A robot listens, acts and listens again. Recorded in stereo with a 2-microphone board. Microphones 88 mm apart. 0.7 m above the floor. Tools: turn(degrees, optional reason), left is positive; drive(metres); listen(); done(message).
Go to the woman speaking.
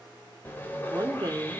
turn(degrees=-50, reason="The woman speaking: about 50° right or 130° right.")
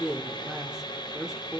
turn(degrees=-10, reason="So it is at 10° right.")
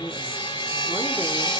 listen()
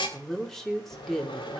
drive(metres=1.0)
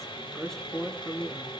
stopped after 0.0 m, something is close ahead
done("Something is in my way. I am facing the woman speaking but have not reached it.")